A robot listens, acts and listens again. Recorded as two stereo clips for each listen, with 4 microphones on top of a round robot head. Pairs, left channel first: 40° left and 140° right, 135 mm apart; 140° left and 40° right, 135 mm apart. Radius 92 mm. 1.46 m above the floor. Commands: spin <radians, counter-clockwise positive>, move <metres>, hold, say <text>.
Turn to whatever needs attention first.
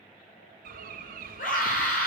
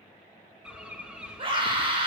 spin 0.26
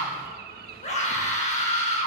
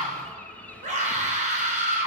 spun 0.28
say Found it: a scream, straight ahead, over 4 m away.